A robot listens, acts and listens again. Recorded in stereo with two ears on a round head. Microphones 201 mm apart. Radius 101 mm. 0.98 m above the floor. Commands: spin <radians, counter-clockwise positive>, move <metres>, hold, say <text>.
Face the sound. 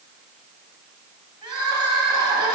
spin -0.35
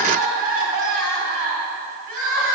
spin -2.44
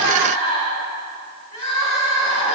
spin 0.52
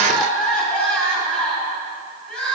say Facing the crying, 2 to 4 m away.